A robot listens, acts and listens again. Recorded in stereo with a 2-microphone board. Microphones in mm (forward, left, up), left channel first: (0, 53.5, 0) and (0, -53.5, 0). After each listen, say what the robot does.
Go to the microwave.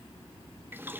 Keep listening.
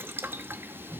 Keep listening.
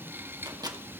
Turn 35° right.
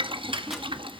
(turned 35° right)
Keep listening.
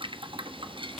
Keep listening.
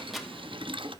Drive 1.0 m forward.
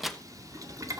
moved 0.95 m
Drive 1.0 m forward.
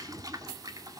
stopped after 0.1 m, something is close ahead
Keep listening.
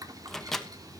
Arrived at the microwave, straight ahead.